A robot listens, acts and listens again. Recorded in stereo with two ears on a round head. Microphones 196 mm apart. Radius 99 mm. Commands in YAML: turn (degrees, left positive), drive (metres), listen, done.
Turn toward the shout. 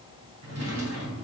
listen: true
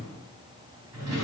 listen: true
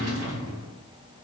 done: "I can't make out a shout to turn to."